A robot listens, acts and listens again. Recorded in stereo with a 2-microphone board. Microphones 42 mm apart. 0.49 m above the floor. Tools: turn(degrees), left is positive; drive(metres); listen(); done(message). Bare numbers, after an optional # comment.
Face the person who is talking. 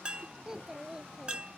# The child speaking: about 15° right or 165° right.
turn(-15)
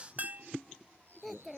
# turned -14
done("Found it: a child speaking, straight ahead.")